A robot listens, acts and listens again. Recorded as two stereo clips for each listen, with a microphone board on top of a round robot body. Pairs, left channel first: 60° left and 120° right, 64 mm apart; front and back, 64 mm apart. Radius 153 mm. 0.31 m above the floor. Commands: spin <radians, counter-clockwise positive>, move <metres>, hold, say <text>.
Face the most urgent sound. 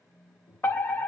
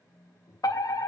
say Facing the fire alarm, over 4 m away.